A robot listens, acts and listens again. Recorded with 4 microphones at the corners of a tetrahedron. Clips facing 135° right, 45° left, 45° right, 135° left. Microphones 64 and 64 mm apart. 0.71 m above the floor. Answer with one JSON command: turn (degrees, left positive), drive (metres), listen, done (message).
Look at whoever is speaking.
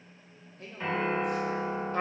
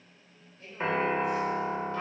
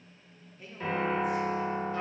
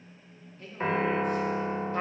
{"turn": -125}
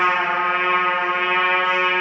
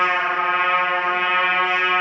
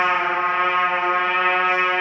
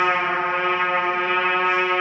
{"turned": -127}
{"listen": true}
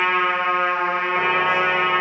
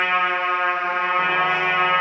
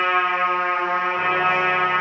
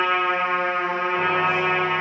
{"listen": true}
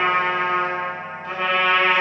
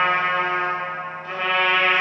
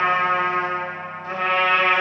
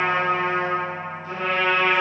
{"done": "Facing where the man speaking came from. I can't hear it now."}